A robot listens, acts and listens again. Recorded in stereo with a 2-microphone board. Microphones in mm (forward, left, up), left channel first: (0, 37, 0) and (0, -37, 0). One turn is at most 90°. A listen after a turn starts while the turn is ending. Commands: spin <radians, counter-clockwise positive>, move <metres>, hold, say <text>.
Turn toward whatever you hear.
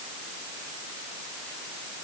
hold
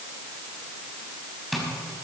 spin 0.52
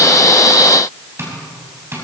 spin -0.61
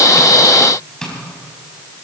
spin 0.17
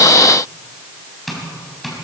say Found it: tapping, straight ahead, 2 to 4 m away.